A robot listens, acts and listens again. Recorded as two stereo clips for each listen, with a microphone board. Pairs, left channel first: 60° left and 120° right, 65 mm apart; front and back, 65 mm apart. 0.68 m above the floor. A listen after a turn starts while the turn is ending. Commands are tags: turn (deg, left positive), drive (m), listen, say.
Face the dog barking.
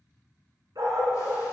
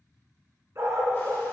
<turn deg="-130"/>
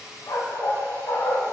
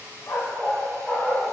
<turn deg="85"/>
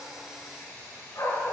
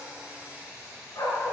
<turn deg="30"/>
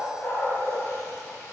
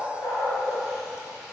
<turn deg="20"/>
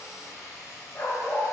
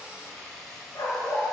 <turn deg="10"/>
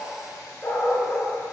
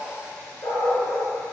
<say>Facing the dog barking, 2 to 4 m away.</say>